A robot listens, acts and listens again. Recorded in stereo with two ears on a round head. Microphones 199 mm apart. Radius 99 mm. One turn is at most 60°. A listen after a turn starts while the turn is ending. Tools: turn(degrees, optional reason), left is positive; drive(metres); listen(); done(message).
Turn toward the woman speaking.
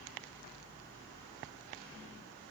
listen()
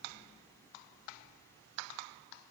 listen()
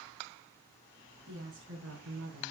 turn(degrees=-55, reason="The woman speaking: about 55° right or 125° right.")
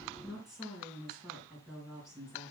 done("Found it: a woman speaking, straight ahead.")